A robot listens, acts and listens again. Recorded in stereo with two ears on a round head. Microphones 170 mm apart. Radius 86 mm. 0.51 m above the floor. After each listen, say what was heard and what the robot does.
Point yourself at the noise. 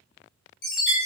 The chime: about 50° left or 130° left. Turn 50° left.
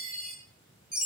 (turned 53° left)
Found it: a chime, straight ahead, 1 to 2 m away.